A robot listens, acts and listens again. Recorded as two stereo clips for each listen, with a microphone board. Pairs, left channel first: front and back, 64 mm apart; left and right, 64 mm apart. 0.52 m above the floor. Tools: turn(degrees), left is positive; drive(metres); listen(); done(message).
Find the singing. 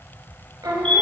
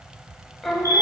turn(degrees=175)
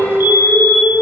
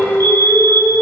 turn(degrees=55)
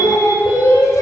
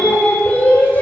turn(degrees=30)
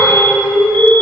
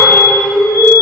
turn(degrees=20)
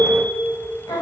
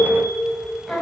done("Facing the singing.")